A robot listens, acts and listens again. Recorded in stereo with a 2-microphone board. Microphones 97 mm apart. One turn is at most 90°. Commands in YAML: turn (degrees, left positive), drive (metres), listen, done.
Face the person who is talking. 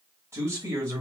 turn: -30
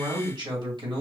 turn: -90
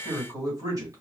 turn: -50
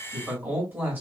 turn: -25
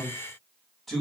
done: "Facing the man speaking."